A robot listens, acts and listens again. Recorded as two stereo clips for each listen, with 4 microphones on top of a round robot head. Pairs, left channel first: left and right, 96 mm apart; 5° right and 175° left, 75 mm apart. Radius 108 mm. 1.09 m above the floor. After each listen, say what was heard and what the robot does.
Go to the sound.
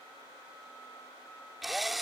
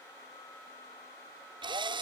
The drill: straight behind. Turn 180° left.
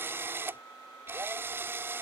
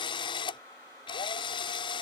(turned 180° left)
The drill is now 20° right. Turn 20° right.
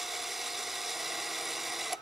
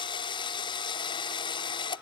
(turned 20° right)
Drive 1.0 m forward.
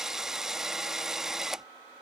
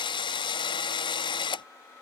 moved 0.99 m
Drive 1.0 m forward.
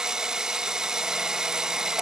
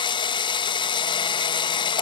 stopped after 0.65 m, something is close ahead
I am next to the drill.